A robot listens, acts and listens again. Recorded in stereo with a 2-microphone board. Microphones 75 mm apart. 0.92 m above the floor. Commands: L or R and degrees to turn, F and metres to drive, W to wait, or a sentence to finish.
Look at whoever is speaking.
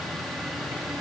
W
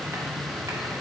W
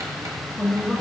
L30
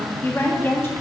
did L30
L145
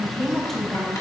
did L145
Found it: a woman speaking, straight ahead, 1 to 2 m away.